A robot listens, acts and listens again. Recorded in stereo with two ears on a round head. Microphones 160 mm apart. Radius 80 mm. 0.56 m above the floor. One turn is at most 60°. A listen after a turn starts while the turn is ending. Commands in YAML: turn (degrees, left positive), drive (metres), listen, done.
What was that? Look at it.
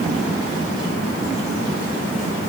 listen: true
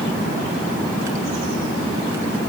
listen: true
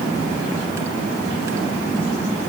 done: "I can't make out anything to turn to."